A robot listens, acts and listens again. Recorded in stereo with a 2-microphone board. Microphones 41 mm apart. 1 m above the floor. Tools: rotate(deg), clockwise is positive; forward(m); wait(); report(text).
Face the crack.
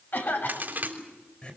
rotate(45)
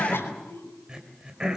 wait()
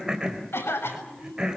report("I heard a crack, but can't make it out now. It was about straight ahead or 90° right.")